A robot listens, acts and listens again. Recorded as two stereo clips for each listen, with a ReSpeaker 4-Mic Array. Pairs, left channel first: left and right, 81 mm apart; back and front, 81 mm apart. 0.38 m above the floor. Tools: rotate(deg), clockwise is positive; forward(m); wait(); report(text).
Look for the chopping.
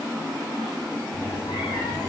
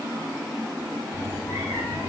wait()
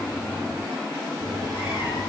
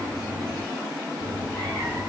wait()
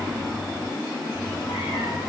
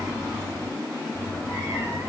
report("I can't make out chopping, only a cat meowing.")